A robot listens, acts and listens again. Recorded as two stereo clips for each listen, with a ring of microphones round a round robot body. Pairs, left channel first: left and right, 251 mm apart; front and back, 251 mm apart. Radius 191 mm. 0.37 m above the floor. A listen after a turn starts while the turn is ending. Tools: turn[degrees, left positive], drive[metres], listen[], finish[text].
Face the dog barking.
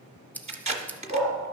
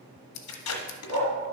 Thought: The dog barking: 150° left.
Action: turn[150]
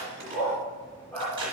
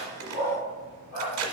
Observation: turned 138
Action: finish[Facing the dog barking.]